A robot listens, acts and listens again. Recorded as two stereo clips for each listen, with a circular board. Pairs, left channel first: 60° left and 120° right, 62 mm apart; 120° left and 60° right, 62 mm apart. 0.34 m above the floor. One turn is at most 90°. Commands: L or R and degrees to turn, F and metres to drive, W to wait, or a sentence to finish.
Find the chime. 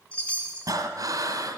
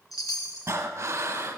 L90
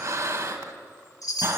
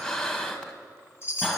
L75
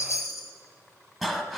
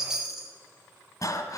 L25
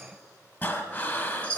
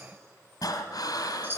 Facing the chime, 1 to 2 m away.